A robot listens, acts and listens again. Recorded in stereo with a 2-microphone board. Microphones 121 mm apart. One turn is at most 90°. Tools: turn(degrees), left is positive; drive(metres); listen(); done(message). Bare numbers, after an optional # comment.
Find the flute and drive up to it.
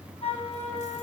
# The flute: about 60° left or 120° left.
turn(60)
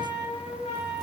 # So it is at 65° left.
turn(65)
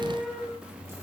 drive(1.0)
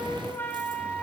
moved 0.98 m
# The flute is now 15° left.
turn(15)
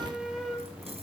drive(1.0)
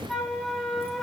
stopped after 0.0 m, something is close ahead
done("I am next to the flute.")